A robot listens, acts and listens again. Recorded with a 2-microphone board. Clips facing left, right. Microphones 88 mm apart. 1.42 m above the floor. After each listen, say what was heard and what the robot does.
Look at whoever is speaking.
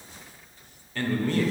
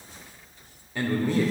Turn 30° right.
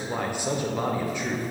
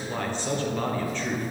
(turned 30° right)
So it is at 15° left. Turn 15° left.
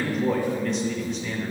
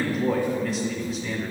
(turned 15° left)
Facing the man speaking, under 1 m away.